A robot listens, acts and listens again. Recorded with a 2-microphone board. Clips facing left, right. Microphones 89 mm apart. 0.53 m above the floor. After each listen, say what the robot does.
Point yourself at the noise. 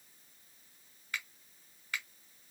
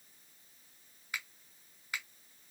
Turn 15° right.
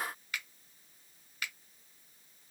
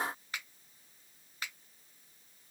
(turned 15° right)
Turn 150° right.
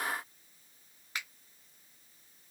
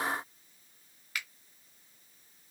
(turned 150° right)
Turn 35° left.
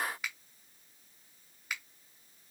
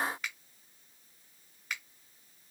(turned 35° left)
Facing the finger snap.